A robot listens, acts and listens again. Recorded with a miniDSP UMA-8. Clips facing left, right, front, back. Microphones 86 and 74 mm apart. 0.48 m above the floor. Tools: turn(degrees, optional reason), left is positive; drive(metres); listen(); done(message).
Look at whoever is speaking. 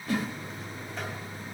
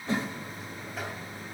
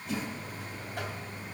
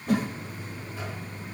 listen()
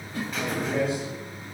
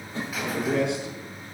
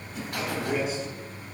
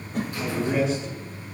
turn(degrees=-85, reason="The man speaking: 85° right.")
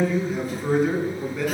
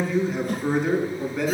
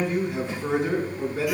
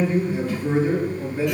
done("Found it: a man speaking, straight ahead.")